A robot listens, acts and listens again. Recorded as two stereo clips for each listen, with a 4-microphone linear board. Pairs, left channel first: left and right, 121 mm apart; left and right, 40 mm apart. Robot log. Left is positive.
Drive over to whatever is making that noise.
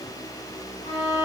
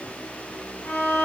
cmd yaw +90
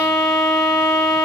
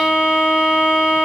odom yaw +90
cmd fwd 1.0
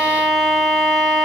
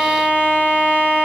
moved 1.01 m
cmd fwd 1.0
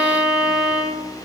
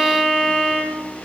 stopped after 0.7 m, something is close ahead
end: Arrived at the violin, straight ahead.